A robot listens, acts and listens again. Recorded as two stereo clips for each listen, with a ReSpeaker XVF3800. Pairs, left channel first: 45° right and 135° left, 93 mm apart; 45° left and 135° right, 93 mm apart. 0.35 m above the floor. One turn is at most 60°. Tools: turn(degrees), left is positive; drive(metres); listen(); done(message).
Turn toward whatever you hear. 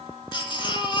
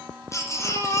turn(degrees=-15)
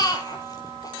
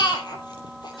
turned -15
done("Facing the baby crying.")